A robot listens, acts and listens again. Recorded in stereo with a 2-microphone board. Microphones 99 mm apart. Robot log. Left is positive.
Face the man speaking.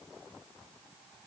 cmd idle
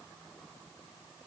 cmd idle
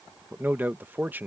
note: The man speaking: about 20° right or 160° right.
cmd yaw -20
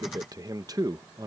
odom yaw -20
note: So it is at 140° right.
cmd yaw -140
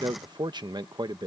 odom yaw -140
note: The man speaking is now 45° right.
cmd yaw -45
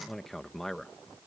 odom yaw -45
end: Facing the man speaking.